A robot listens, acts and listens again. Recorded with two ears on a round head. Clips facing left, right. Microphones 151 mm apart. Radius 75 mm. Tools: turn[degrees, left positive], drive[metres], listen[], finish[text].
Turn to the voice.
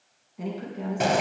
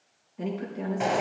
Action: turn[30]
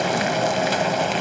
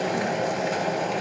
Action: listen[]
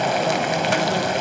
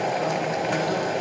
Action: listen[]
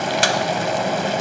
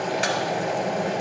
Action: finish[I heard a woman speaking, but can't make it out now. It was about 20° right or 140° left.]